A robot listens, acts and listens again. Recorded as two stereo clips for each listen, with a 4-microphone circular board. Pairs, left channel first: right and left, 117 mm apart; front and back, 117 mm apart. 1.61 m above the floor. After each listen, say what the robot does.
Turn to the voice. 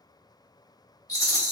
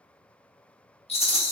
Keep listening.
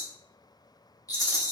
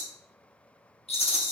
Keep listening.
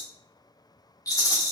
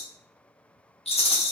I can't make out anyone speaking to turn to.